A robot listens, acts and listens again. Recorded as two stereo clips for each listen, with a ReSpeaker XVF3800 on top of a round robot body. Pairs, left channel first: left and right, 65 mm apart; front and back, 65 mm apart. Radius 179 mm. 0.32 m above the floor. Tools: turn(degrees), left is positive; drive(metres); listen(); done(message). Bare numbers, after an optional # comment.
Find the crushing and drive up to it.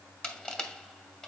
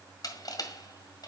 # The crushing: 10° left.
turn(10)
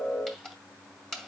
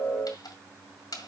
drive(1.0)
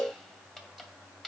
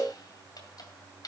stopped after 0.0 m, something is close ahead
done("Something is in my way. I am facing the crushing but have not reached it.")